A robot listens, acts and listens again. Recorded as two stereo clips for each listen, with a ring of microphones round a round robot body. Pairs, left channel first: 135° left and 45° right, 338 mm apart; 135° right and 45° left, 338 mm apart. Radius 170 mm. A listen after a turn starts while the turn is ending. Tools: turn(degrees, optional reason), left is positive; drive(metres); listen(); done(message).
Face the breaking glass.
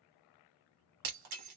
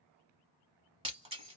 turn(degrees=-30, reason="The breaking glass: 30° right.")
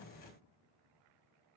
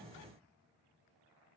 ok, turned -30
done("I heard breaking glass from this way, but can't make it out now.")